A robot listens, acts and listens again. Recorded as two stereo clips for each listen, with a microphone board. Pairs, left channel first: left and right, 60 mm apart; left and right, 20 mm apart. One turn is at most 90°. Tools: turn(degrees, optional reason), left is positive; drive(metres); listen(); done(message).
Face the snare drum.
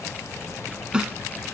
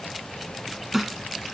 turn(degrees=-30)
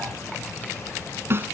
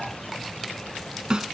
turn(degrees=-90, reason="So it is at 140° right.")
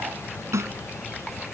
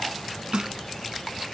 turn(degrees=-55, reason="The snare drum is now 55° right.")
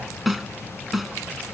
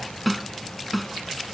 done("Found it: a snare drum, straight ahead.")